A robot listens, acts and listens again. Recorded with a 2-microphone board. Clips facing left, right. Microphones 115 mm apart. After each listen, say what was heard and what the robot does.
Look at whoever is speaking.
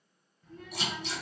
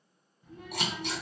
Turn 30° right.
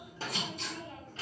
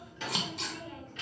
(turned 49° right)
So it is at 35° left. Turn 35° left.
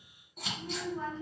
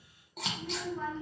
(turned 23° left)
The child speaking is now 10° left. Turn 10° left.
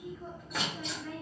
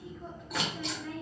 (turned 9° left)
Facing the child speaking, 1 to 2 m away.